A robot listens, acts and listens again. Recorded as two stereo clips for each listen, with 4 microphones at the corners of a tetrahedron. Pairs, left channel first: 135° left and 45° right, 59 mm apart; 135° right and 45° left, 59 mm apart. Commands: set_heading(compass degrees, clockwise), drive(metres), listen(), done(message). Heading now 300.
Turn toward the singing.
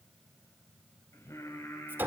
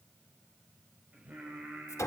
set_heading(195)
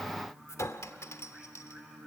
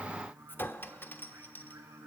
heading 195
set_heading(170)
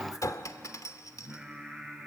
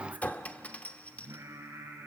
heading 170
set_heading(150)
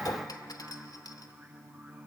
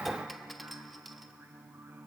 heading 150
done("Found it: singing, straight ahead.")